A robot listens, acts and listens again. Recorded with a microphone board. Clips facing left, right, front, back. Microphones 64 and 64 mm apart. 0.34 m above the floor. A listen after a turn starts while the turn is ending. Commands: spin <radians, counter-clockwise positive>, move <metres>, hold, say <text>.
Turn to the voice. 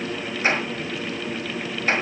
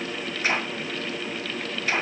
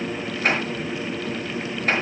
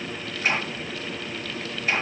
hold
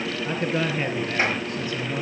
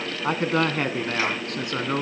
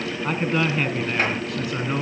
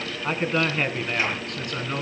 spin -1.48
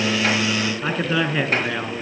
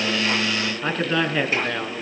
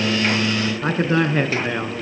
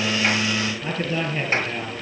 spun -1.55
say Facing the man speaking, 2 to 4 m away.